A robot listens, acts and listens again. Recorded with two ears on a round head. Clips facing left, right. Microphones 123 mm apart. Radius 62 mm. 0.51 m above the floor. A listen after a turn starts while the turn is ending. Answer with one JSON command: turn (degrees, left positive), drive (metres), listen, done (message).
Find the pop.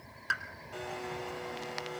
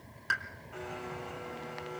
{"turn": 30}
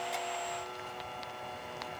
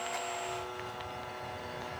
{"listen": true}
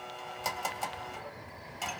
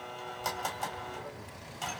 {"done": "I heard a pop, but can't make it out now. It was about 30° right or 150° left."}